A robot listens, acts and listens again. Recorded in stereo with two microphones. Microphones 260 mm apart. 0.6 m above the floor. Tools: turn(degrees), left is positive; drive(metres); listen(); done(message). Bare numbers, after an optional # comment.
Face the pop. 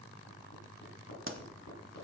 # The pop: about 50° right or 130° right.
turn(-50)
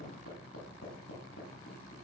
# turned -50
listen()
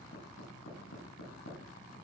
done("I heard a pop, but can't make it out now. It was about straight ahead or 80° right.")